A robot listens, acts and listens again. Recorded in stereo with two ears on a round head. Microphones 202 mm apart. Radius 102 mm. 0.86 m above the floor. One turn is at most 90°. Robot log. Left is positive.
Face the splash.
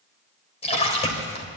note: The splash: about 30° left or 150° left.
cmd yaw +30
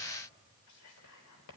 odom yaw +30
cmd idle
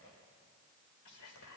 end: I heard a splash, but can't make it out now. It was about straight ahead or 120° left.